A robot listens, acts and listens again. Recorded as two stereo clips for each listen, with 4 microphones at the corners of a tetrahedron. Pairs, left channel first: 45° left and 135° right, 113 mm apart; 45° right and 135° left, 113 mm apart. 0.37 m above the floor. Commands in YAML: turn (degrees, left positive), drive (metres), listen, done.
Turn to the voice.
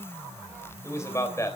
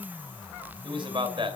turn: 105
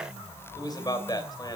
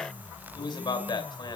done: "Found it: a man speaking, straight ahead."